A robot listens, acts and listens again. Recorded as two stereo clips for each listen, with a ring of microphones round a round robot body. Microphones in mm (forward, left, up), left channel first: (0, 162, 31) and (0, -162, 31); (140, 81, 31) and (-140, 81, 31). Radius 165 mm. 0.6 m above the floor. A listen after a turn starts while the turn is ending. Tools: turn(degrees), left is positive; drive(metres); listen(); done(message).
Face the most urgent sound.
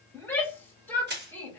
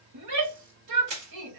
turn(degrees=175)
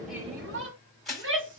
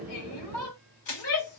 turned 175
turn(degrees=-35)
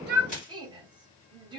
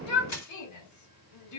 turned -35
turn(degrees=-15)
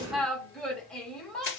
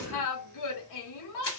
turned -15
done("Facing the shout.")